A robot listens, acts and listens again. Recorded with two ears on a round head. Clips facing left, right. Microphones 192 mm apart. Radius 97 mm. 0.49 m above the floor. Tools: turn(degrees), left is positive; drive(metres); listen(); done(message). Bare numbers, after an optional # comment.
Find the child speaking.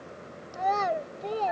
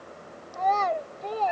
turn(30)
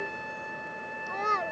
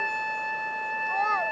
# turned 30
# So it is at 140° left.
turn(140)
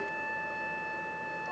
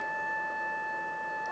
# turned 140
listen()
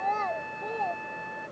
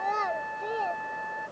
# The child speaking is now 15° right.
turn(-15)
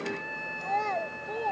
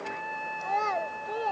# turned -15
done("Found it: a child speaking, straight ahead.")